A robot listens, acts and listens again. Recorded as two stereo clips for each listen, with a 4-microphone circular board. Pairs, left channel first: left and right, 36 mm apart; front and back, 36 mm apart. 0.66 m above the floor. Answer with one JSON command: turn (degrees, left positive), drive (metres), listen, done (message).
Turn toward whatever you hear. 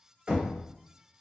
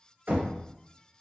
{"turn": -150}
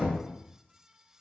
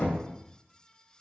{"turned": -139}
{"turn": -15}
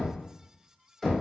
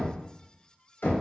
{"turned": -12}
{"done": "Found it: knocking, straight ahead."}